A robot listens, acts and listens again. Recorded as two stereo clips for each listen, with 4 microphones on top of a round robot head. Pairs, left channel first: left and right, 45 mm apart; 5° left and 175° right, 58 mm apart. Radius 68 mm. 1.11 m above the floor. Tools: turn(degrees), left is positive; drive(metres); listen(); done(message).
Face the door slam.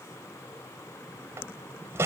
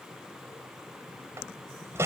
turn(degrees=-125)
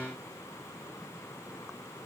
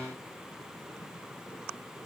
done("I heard a door slam from this way, but can't make it out now.")